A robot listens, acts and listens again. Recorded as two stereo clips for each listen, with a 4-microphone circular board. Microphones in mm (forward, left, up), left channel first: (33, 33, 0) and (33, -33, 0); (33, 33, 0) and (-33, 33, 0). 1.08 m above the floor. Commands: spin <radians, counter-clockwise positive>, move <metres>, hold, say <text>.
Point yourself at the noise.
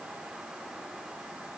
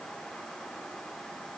hold
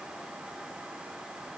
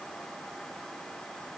hold
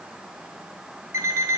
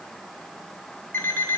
spin -0.87
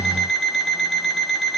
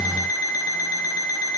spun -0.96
say Found it: an alarm clock, straight ahead, 1 to 2 m away.